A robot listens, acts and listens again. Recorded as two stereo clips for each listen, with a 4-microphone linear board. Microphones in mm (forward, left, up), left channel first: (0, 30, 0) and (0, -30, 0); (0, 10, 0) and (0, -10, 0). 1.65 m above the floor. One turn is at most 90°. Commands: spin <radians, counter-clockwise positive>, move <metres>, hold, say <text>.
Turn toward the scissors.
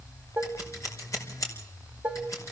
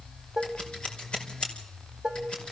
spin 0.96
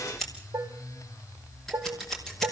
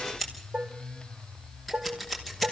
say Found it: scissors, straight ahead, over 4 m away.